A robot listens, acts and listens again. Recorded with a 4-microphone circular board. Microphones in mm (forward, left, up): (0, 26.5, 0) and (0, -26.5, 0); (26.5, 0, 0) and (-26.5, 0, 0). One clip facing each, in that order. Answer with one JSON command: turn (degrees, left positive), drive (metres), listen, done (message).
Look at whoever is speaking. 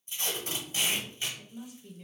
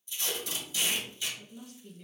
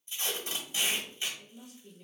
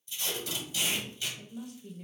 {"turn": 170}
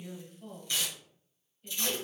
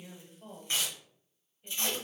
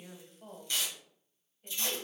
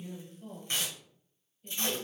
{"turn": -20}
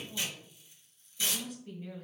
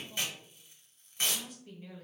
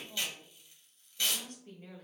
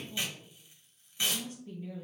{"done": "Found it: a woman speaking, straight ahead."}